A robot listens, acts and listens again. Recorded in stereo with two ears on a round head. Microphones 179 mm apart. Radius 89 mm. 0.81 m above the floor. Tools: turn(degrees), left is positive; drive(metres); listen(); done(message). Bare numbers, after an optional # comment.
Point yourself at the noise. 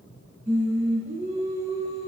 # The singing: about 30° right or 150° right.
turn(-30)
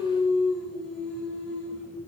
done("Found it: singing, straight ahead, over 4 m away.")